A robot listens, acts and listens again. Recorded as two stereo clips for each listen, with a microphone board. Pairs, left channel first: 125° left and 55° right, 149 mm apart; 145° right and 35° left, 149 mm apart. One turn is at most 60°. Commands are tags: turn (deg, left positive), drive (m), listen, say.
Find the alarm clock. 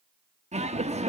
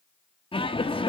<listen/>
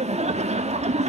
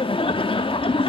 <listen/>
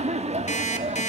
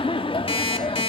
<turn deg="60"/>
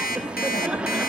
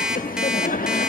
<turn deg="60"/>
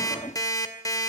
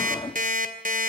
<turn deg="60"/>
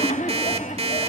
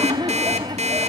<turn deg="-10"/>
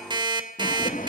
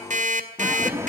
<say>Facing the alarm clock, 2 to 4 m away.</say>